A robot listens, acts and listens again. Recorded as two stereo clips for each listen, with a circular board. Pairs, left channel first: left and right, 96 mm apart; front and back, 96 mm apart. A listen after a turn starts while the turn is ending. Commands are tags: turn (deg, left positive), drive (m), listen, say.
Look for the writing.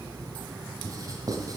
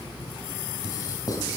<turn deg="-45"/>
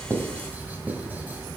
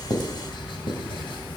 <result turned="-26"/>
<turn deg="-20"/>
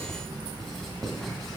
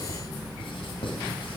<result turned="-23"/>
<listen/>
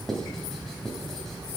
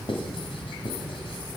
<say>Facing the writing, 1 to 2 m away.</say>